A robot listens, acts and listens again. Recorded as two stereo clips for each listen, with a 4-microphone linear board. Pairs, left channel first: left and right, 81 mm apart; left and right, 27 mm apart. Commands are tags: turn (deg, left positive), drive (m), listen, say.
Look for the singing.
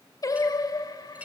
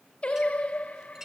<turn deg="55"/>
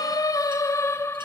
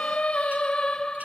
<turn deg="30"/>
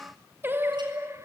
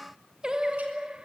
<turn deg="-35"/>
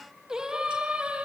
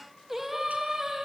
<turn deg="-15"/>
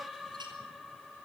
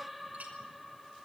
<say>Facing the singing, 2 to 4 m away.</say>